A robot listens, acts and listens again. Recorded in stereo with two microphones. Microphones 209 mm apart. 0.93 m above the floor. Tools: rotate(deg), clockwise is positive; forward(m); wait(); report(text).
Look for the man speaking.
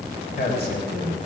rotate(-55)
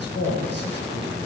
rotate(-60)
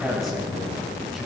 report("Facing the man speaking.")